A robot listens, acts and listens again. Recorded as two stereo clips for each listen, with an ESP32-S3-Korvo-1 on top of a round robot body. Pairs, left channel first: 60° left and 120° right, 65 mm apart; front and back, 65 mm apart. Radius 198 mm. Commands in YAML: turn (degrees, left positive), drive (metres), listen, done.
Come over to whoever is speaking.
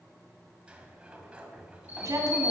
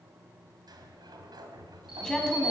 turn: -75
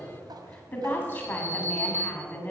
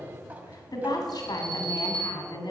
drive: 1.0
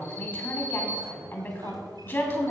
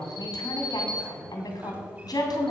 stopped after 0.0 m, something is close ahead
done: "Something is in my way. I am facing the woman speaking but have not reached it."